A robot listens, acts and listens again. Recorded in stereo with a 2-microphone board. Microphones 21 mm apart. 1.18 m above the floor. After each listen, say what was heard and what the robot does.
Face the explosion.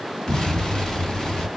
The explosion: about 35° left or 145° left. Turn 35° left.
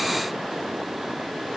Keep listening.
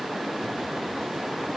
I heard an explosion, but can't make it out now. It was about straight ahead or 110° left.